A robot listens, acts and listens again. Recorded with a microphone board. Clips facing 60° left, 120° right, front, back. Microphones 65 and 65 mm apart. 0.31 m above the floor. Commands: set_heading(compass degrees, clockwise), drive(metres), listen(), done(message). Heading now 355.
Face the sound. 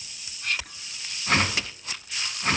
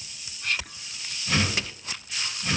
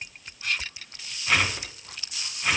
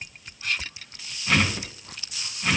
set_heading(265)
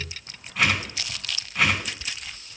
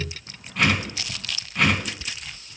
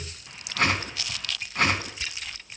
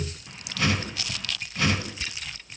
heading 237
set_heading(267)
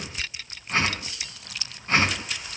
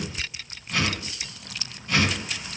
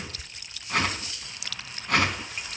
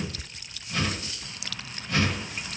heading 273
set_heading(263)
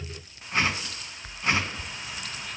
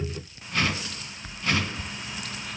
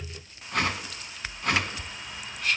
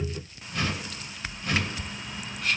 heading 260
done("Found it: a whoosh, straight ahead.")